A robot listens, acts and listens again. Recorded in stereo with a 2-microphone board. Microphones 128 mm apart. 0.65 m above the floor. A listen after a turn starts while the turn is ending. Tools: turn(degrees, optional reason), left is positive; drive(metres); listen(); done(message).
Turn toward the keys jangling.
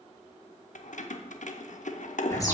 turn(degrees=75, reason="The keys jangling: about 75° left or 105° left.")
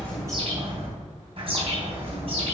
listen()
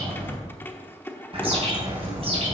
turn(degrees=15, reason="So it is at 15° left.")
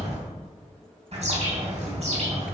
listen()
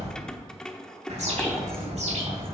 done("Found it: keys jangling, straight ahead.")